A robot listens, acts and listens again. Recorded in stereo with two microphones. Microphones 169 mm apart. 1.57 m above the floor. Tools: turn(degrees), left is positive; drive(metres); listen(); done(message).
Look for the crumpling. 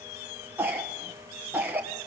listen()
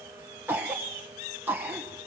listen()
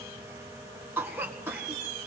done("I can't make out crumpling, only a cough.")